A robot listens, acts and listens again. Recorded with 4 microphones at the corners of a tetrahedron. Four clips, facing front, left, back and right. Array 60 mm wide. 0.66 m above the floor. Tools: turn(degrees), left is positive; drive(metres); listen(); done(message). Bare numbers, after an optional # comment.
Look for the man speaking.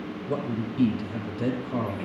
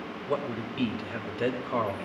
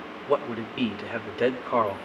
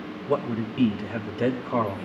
# The man speaking: 170° right.
turn(-170)
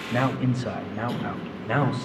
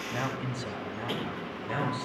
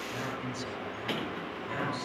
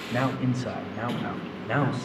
# The man speaking is now 35° right.
turn(-35)
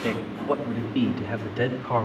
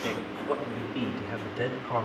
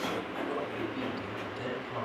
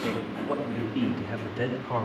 done("Facing the man speaking, over 4 m away.")